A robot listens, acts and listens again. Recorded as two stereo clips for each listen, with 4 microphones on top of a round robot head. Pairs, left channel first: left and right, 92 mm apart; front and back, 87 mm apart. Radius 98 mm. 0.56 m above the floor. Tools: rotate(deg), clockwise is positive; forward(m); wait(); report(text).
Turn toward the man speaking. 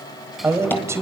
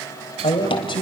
rotate(30)
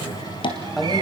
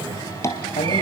report("Found it: a man speaking, straight ahead.")